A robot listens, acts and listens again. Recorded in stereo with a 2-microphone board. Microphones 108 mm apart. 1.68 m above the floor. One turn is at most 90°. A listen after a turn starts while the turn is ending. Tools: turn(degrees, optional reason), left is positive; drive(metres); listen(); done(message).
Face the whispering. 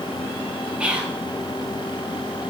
turn(degrees=-30)
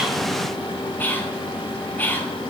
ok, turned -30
turn(degrees=20, reason="So it is at 20° left.")
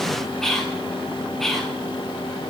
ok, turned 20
done("Found it: whispering, straight ahead.")